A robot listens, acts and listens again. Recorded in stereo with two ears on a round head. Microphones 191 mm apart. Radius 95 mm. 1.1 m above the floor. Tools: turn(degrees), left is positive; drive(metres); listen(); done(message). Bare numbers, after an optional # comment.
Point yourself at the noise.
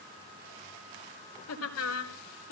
turn(90)
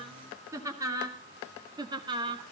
# So it is at 25° right.
turn(-25)
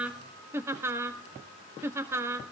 # The laughter is now 15° right.
turn(-15)
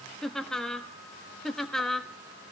done("Found it: laughter, straight ahead.")